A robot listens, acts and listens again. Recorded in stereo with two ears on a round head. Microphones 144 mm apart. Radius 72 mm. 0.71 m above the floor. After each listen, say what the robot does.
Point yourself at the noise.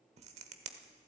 Turn 40° right.
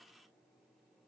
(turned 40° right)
Keep listening.
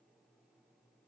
I heard a crack, but can't make it out now. It was about straight ahead or 100° right.